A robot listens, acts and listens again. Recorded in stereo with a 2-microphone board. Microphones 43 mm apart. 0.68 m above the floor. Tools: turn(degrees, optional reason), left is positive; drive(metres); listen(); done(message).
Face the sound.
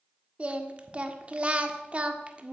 turn(degrees=-30, reason="The singing: about 30° right or 150° right.")
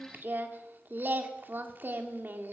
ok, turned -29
turn(degrees=-120, reason="So it is at 120° right.")
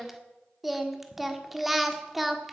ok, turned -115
done("Facing the singing, 1 to 2 m away.")